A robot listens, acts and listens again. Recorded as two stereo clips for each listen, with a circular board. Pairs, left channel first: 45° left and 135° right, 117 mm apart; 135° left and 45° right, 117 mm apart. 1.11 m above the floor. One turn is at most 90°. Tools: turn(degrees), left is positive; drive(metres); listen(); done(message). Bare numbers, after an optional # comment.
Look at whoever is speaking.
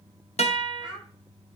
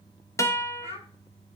# The child speaking: 100° left.
turn(90)
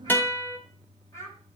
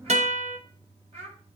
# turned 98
# The child speaking is now 20° right.
turn(-20)
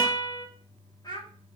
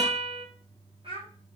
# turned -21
# The child speaking is now 10° right.
turn(-10)
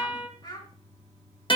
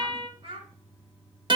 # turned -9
done("Facing the child speaking, 2 to 4 m away.")